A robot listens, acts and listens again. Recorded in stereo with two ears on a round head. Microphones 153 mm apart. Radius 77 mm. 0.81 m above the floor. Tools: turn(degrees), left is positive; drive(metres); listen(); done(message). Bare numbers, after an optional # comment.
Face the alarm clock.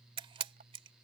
listen()
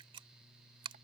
listen()
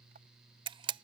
done("I can't make out an alarm clock to turn to.")